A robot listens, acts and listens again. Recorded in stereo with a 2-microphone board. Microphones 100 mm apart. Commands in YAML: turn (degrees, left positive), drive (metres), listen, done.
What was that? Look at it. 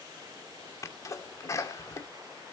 turn: 30
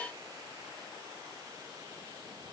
listen: true
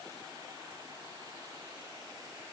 done: "I heard a sneeze, but can't make it out now. It was about straight ahead or 120° left."